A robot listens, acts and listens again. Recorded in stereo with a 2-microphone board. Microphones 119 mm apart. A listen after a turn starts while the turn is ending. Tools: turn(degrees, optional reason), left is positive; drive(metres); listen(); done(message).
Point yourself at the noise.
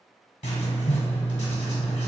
turn(degrees=90)
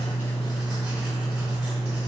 turn(degrees=-10, reason="So it is at 10° right.")
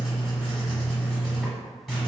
done("Found it: writing, straight ahead.")